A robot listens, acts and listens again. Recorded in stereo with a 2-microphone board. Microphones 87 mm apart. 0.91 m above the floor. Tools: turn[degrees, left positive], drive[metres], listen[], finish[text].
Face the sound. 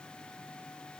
Action: listen[]
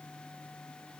Action: listen[]
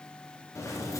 Thought: The keys jangling: about 35° left or 145° left.
Action: turn[35]
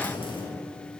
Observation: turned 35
Thought: So it is at 110° left.
Action: turn[110]
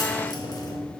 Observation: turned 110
Thought: The keys jangling is now 50° left.
Action: turn[50]
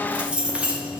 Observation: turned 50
Thought: The keys jangling is now 10° right.
Action: turn[-10]
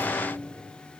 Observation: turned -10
Action: listen[]
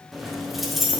Action: finish[Found it: keys jangling, straight ahead, 1 to 2 m away.]